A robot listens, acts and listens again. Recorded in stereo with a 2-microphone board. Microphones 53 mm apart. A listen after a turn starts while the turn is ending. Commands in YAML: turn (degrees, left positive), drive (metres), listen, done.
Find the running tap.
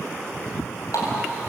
turn: 90
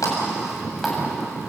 listen: true
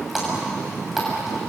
done: "Found it: a running tap, straight ahead, over 4 m away."